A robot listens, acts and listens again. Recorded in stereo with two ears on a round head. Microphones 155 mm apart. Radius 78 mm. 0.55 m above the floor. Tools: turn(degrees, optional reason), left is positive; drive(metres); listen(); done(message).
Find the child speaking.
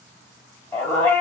listen()
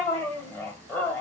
listen()
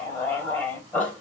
done("I can't make out a child speaking, only a dog barking.")